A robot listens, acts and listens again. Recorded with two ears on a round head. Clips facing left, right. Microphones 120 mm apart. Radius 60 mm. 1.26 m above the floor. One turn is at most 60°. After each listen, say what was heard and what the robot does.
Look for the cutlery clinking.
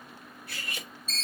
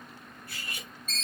The cutlery clinking: about 60° left or 120° left. Turn 60° left.
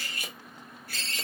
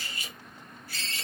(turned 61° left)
So it is at 50° left. Turn 50° left.
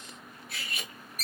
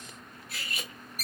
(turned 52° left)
Found it: cutlery clinking, straight ahead, under 1 m away.